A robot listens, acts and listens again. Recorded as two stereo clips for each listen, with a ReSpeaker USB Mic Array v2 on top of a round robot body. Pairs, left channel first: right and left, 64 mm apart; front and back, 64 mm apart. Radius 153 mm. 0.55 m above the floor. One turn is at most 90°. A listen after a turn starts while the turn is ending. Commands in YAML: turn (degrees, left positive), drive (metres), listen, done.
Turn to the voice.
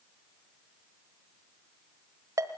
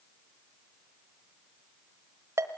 listen: true
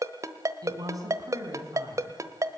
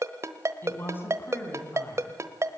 turn: 55
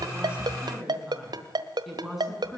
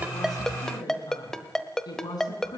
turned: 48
done: "Facing the woman speaking."